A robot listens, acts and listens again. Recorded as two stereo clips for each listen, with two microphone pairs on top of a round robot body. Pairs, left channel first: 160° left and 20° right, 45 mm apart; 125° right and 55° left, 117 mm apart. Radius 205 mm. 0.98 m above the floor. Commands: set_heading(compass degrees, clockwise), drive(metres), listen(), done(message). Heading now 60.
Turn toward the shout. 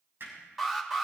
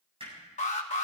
listen()
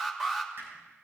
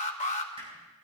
listen()
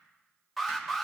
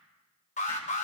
done("I can't make out a shout to turn to.")